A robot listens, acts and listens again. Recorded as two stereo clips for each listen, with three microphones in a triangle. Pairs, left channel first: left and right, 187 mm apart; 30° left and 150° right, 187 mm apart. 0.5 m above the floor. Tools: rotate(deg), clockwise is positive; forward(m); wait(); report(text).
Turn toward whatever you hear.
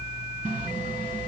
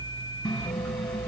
rotate(55)
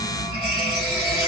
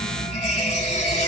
rotate(20)
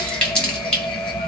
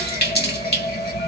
report("Facing the running tap.")